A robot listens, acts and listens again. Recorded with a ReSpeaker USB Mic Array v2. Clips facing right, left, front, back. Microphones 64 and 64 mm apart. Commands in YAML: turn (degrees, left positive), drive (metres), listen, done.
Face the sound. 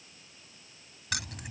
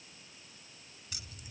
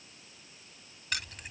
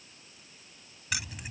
turn: -95
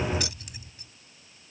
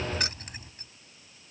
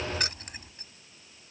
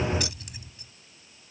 turn: 45
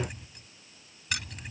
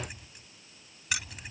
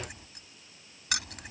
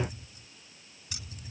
done: "Found it: keys jangling, straight ahead."